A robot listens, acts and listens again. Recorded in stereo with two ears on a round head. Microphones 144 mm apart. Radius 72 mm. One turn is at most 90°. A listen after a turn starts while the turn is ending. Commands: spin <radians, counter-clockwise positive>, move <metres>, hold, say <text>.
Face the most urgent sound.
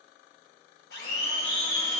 spin 0.70
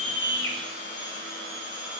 hold
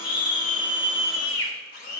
spin 1.57
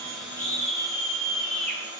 say Facing the scream.